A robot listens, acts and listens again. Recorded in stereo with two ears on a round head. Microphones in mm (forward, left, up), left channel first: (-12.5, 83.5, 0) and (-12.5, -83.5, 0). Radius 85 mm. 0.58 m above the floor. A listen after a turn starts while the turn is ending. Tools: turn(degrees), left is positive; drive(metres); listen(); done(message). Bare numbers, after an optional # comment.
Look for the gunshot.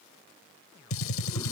# The gunshot: about 75° left or 105° left.
turn(75)
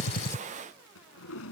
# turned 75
listen()
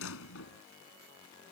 done("I heard a gunshot, but can't make it out now. It was about straight ahead or 30° left.")